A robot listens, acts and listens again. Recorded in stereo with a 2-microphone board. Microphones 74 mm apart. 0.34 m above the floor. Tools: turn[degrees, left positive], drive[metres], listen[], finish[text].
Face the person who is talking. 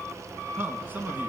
Thought: The man speaking: about 25° right or 155° right.
Action: turn[-25]
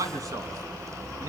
Thought: So it is at 125° right.
Action: turn[-125]
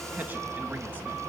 Thought: The man speaking is now 25° right.
Action: turn[-25]
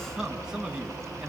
Thought: The man speaking is now 10° right.
Action: turn[-10]
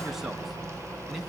Action: listen[]
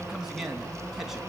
Action: finish[Found it: a man speaking, straight ahead, 2 to 4 m away.]